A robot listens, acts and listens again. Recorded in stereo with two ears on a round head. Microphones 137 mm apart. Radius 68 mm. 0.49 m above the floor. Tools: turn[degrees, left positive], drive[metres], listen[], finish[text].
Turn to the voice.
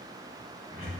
Action: listen[]
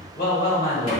Thought: The woman speaking: about 60° left or 120° left.
Action: turn[60]
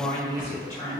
Thought: So it is at 20° left.
Action: turn[20]
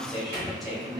Action: finish[Found it: a woman speaking, straight ahead.]